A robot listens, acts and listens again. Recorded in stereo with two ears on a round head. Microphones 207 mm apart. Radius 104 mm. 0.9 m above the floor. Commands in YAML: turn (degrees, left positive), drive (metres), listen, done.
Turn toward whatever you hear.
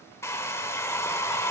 turn: 30
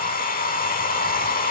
turn: 140
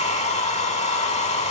turn: 30
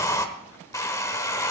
turn: 15
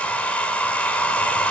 done: "Found it: a hair dryer, straight ahead."